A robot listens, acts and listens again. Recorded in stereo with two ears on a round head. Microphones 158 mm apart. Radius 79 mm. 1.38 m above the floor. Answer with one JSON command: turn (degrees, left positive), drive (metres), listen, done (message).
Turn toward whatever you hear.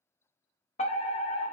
{"turn": 40}
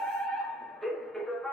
{"done": "Facing the fire alarm."}